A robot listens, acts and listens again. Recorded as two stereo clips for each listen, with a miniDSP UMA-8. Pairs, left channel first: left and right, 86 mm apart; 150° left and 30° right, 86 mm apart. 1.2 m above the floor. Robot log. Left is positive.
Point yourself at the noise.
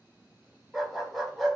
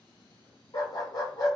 note: The dog barking: straight behind.
cmd yaw +180
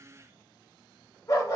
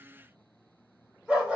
note: The dog barking is now 45° left.
cmd yaw +45
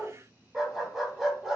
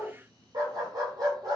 end: Found it: a dog barking, straight ahead.